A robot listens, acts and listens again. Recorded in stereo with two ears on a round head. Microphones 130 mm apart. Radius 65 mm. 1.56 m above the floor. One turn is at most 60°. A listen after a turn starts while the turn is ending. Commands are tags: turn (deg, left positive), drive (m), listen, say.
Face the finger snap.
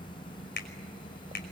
<turn deg="60"/>
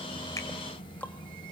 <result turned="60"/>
<listen/>
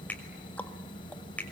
<turn deg="10"/>
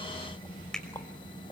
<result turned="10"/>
<say>Facing the finger snap, over 4 m away.</say>